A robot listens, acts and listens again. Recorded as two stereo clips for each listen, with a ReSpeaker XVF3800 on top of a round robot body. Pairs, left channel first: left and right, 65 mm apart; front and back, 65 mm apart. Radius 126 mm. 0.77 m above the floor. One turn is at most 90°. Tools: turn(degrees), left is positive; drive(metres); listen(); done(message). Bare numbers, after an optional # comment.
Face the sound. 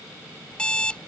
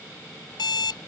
# The alarm clock: 15° left.
turn(15)
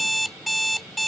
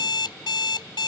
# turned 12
done("Found it: an alarm clock, straight ahead.")